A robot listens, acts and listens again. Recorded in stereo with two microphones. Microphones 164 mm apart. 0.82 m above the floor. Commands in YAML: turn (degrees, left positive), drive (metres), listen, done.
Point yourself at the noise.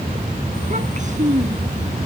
turn: -50
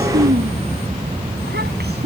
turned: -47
turn: -85
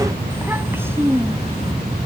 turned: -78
turn: -15
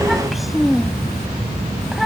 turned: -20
done: "Found it: a child speaking, straight ahead."